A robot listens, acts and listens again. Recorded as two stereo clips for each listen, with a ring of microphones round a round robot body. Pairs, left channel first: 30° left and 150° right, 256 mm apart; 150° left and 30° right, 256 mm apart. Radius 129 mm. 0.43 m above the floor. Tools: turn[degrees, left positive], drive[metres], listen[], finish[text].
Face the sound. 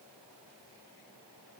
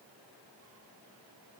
Action: listen[]
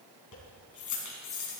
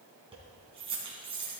Thought: The keys jangling: 40° left.
Action: turn[40]
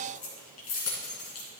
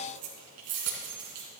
Action: finish[Found it: keys jangling, straight ahead, 2 to 4 m away.]